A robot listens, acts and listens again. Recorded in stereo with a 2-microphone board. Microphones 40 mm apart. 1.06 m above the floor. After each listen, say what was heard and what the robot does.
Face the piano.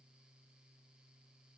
Keep listening.
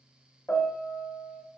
The piano: about 65° left or 115° left. Turn 65° left.
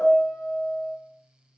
So it is at 30° left. Turn 30° left.
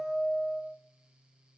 Found it: a piano, straight ahead.